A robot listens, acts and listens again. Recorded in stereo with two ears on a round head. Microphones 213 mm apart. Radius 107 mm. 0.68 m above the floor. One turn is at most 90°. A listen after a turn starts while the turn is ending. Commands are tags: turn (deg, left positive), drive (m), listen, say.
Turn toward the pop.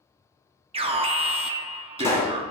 <turn deg="30"/>
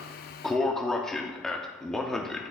<listen/>
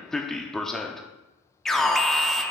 <say>I heard a pop, but can't make it out now. It was about 20° right or 140° left.</say>